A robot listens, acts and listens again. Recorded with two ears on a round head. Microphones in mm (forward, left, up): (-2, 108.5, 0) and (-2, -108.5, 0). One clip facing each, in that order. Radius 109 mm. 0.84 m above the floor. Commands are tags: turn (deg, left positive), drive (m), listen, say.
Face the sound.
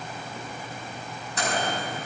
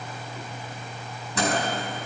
<turn deg="-65"/>
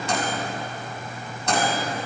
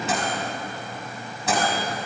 <say>Facing the microwave.</say>